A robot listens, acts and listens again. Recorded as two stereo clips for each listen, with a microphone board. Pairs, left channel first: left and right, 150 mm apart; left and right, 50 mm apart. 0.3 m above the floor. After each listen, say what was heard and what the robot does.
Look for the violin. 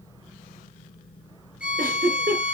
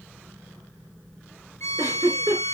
The violin: about 70° left or 110° left. Turn 70° left.
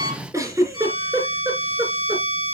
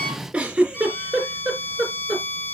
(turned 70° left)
So it is at 35° left. Turn 35° left.
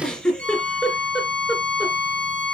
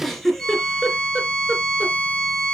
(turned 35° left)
The violin is now 10° left. Turn 10° left.
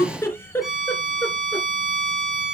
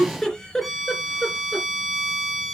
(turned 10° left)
Facing the violin, 2 to 4 m away.